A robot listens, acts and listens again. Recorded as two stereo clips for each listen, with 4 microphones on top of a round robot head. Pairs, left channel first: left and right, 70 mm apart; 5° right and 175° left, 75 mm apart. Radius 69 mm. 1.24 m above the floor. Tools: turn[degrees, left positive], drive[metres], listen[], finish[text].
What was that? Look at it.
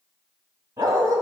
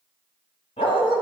Thought: The dog barking: 30° right.
Action: turn[-30]
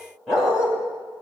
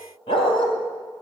Action: finish[Facing the dog barking, 2 to 4 m away.]